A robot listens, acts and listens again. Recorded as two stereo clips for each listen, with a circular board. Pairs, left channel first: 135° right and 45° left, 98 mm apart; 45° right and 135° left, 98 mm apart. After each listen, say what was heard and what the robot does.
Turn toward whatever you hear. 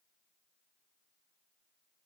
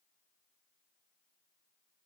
Keep listening.
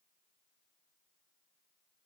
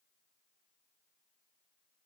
Keep listening.
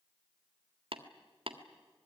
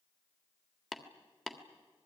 The tapping: 45° left. Turn 45° left.
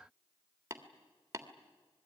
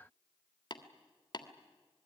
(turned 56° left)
The tapping is now 15° right. Turn 15° right.
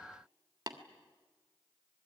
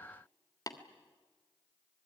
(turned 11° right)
Facing the tapping, 1 to 2 m away.